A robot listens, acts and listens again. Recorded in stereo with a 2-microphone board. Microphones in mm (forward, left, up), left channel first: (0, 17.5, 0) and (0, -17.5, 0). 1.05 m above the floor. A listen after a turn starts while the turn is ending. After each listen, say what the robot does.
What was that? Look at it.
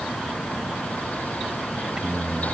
Turn 25° right.
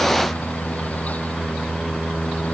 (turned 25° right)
Turn 30° right.
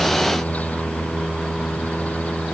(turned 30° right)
Found it: singing, straight ahead.